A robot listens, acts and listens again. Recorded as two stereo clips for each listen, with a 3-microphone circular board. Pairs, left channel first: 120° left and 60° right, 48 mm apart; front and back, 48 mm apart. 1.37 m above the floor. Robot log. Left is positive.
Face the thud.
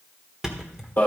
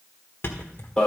note: The thud: 20° left.
cmd yaw +20
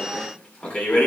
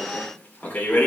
end: I heard a thud from this way, but can't make it out now.